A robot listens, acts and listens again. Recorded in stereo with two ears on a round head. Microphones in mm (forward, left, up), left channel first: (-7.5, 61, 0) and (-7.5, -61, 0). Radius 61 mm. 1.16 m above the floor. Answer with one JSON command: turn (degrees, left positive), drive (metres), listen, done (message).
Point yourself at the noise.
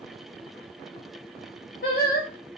{"turn": 65}
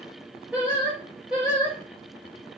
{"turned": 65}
{"turn": -10}
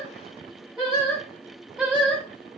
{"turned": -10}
{"done": "Found it: singing, straight ahead."}